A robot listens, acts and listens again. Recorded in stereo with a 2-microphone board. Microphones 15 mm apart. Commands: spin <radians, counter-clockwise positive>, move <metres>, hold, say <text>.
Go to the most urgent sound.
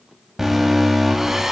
spin -0.35
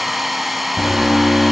spin -2.44
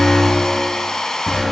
spin 0.17
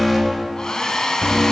move 1.0
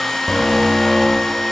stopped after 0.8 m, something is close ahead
say Arrived at the alarm, straight ahead.